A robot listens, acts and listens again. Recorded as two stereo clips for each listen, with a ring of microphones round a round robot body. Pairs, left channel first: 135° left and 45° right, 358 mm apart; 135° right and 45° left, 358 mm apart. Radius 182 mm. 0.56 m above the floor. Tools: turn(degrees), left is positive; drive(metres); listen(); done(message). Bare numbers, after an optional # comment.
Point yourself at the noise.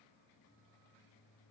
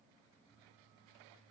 listen()
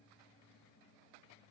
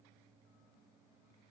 listen()
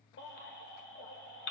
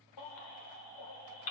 # The baby crying: 165° right.
turn(-165)
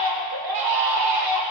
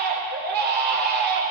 # The baby crying is now 20° right.
turn(-20)
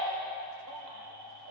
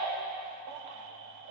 listen()
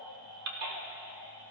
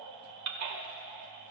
done("Facing the baby crying, 1 to 2 m away.")